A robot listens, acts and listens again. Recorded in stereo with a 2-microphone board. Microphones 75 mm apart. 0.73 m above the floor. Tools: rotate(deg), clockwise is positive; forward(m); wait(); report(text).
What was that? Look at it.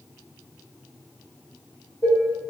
rotate(-70)
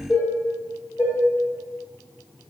rotate(-35)
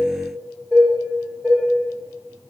rotate(-10)
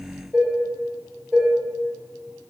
report("Facing the dishes clattering, 1 to 2 m away.")